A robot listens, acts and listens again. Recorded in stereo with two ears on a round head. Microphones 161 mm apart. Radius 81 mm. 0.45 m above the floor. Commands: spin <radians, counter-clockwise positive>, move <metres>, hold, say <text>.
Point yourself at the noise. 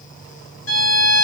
spin 1.22
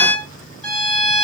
say Found it: a violin, straight ahead, 1 to 2 m away.